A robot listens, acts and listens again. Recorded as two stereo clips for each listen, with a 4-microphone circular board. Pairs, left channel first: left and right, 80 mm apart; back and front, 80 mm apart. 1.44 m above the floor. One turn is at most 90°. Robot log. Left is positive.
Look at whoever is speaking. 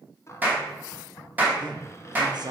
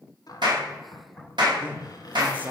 note: The man speaking: 70° right.
cmd yaw -70
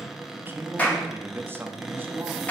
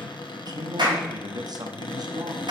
note: The man speaking is now 30° right.
cmd yaw -30
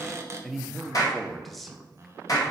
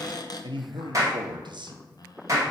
end: Found it: a man speaking, straight ahead, 1 to 2 m away.